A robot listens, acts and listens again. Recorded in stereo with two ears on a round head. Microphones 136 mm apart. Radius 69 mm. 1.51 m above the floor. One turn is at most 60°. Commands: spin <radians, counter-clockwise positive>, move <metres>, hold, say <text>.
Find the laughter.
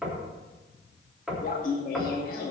spin 1.05
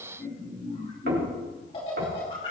spin 0.61
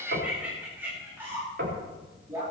spin -0.26
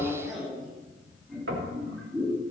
say Facing the laughter, 2 to 4 m away.